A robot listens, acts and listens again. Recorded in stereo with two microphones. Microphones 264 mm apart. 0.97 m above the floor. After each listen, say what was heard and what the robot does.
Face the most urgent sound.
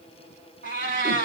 Keep listening.
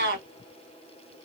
Keep listening.
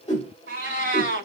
I can't make out anything urgent to turn to.